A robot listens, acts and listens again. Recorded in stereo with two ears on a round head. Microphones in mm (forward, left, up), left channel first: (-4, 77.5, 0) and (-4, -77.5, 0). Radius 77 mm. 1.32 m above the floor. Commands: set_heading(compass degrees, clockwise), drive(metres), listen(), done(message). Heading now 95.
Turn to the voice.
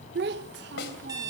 set_heading(160)
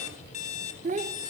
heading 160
set_heading(205)
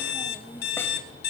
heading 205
listen()
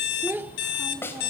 set_heading(215)
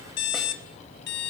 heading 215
listen()
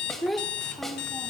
done("Found it: a child speaking, straight ahead, under 1 m away.")